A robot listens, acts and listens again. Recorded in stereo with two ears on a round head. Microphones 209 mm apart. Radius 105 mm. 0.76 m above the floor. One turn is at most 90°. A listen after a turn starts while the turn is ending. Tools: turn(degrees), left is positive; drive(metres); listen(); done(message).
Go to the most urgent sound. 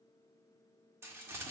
listen()
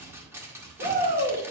turn(degrees=-40)
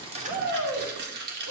turn(degrees=-90)
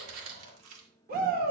turn(degrees=-45)
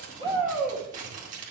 drive(metres=1.0)
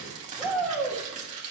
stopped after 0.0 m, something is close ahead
done("Blocked. The shout is further on, straight ahead.")